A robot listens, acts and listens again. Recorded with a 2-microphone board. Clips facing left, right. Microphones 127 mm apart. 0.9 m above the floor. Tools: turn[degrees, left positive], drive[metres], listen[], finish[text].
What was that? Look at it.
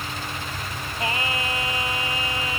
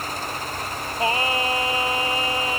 Thought: The singing: about 30° right or 150° right.
Action: turn[-30]
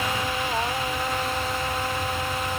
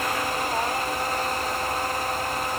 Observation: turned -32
Action: listen[]
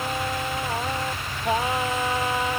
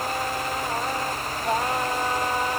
Action: finish[Facing the singing.]